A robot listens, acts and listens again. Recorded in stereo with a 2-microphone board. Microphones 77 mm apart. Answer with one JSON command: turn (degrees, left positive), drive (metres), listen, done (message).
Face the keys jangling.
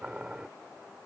{"listen": true}
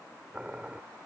{"listen": true}
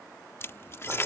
{"turn": 35}
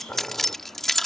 {"done": "Found it: keys jangling, straight ahead."}